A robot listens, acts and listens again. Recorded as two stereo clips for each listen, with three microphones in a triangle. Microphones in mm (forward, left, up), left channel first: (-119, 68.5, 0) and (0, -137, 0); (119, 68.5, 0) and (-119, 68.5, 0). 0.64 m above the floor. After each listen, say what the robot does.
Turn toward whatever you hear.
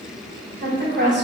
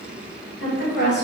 Turn 30° right.
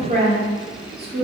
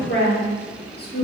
Turn 35° right.
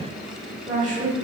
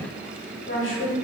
Turn 15° right.
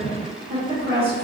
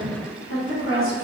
Turn 15° right.
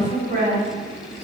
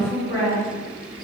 Facing the woman speaking.